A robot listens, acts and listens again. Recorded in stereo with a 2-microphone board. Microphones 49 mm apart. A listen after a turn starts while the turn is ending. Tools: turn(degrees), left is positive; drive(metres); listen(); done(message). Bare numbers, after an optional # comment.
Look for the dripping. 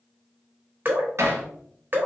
# The dripping: about 40° right or 140° right.
turn(-40)
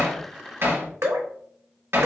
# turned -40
# So it is at 95° right.
turn(-95)
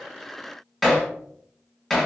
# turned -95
listen()
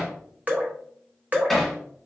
# The dripping is now 35° right.
turn(-35)
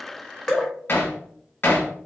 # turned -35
# The dripping is now 10° left.
turn(10)
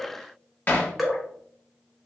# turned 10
done("Found it: dripping, straight ahead.")